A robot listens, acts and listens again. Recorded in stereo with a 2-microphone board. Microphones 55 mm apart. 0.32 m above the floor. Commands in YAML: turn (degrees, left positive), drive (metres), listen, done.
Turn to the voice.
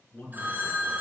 turn: 30
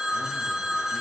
listen: true
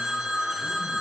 listen: true
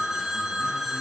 done: "I heard a man speaking, but can't make it out now. It was about straight ahead or 120° left."